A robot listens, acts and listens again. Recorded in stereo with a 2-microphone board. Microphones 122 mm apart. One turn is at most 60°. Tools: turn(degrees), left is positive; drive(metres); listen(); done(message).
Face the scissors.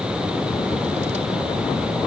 listen()
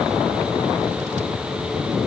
listen()
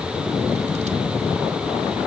done("I can't make out scissors to turn to.")